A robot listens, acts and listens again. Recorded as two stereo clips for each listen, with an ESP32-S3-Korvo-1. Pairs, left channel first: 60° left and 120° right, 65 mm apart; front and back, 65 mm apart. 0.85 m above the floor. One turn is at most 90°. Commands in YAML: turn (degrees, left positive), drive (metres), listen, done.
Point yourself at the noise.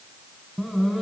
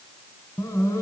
turn: -35
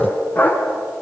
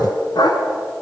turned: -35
done: "Facing the dog barking, 2 to 4 m away."